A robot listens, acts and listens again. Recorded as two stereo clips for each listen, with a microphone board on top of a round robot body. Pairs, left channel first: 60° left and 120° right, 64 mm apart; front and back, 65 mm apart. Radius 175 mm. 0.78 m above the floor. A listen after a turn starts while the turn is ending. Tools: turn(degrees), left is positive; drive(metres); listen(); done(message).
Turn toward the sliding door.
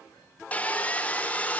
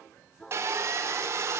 listen()
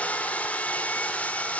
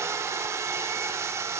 listen()
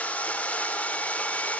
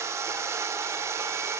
done("I can't make out a sliding door, only sawing.")